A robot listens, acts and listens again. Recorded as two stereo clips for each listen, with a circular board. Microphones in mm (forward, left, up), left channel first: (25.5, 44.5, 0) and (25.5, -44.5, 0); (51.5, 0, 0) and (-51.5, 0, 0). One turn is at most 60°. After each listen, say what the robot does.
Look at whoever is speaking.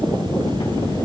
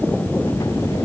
Keep listening.
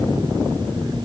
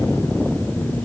Keep listening.
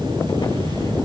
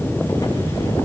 I can't make out anyone speaking to turn to.